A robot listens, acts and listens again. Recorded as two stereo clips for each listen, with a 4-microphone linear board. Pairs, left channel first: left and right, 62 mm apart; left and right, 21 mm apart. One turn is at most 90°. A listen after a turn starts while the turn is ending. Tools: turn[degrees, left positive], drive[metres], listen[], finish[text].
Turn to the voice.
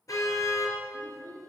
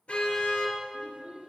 Thought: The child speaking: about 60° right or 120° right.
Action: turn[-60]
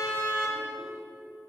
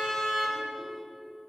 Action: listen[]
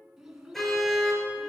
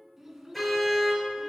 Thought: So it is at 10° right.
Action: turn[-10]
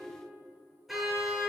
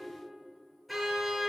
Action: listen[]
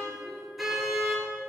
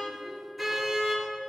Action: listen[]
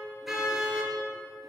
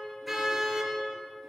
Action: finish[I heard a child speaking from this way, but can't make it out now.]